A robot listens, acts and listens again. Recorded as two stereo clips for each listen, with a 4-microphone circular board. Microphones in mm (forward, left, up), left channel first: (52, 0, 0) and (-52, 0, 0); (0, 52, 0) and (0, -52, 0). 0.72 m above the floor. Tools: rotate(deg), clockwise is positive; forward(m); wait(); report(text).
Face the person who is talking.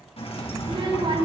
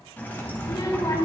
rotate(-145)
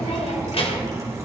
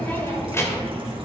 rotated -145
rotate(-25)
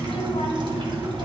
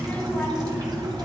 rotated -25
rotate(-15)
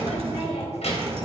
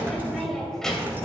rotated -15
report("Facing the child speaking, 2 to 4 m away.")